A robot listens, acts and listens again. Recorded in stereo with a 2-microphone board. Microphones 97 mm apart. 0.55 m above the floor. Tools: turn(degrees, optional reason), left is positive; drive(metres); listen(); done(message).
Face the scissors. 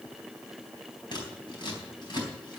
turn(degrees=50, reason="The scissors: about 50° left or 130° left.")
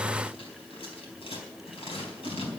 turn(degrees=80, reason="So it is at 80° left.")
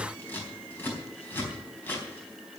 turn(degrees=20, reason="The scissors is now 20° left.")
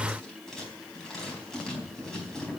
done("Found it: scissors, straight ahead, over 4 m away.")